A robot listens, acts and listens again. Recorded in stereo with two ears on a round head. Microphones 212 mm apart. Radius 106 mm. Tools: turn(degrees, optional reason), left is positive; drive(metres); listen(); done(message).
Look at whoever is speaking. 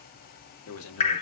turn(degrees=65, reason="The man speaking: about 65° left or 115° left.")
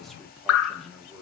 done("Facing the man speaking.")